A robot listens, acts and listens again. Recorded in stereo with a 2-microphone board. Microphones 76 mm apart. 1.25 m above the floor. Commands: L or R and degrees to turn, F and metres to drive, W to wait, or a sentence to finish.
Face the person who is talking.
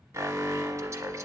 W
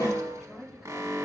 R30
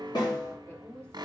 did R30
L25
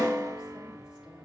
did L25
W
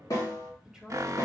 Found it: a woman speaking, straight ahead.